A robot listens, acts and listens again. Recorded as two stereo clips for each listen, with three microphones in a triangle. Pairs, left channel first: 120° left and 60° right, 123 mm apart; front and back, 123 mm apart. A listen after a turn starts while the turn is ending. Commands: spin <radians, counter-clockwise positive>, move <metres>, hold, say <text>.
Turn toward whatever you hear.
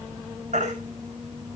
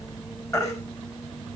spin -1.13
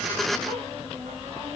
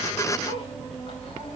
hold
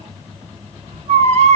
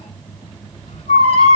spin -0.52
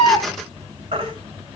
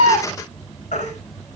spin -0.26
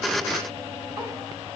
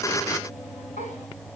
hold
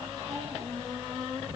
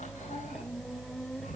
hold
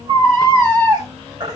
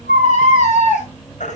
say Facing the baby crying.